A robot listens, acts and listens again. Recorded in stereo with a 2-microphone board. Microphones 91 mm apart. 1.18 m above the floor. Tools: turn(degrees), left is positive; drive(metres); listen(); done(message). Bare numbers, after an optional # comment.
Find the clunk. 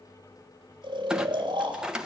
turn(-30)
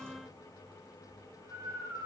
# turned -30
listen()
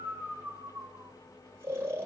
done("I heard a clunk, but can't make it out now. It was about 20° left or 140° right.")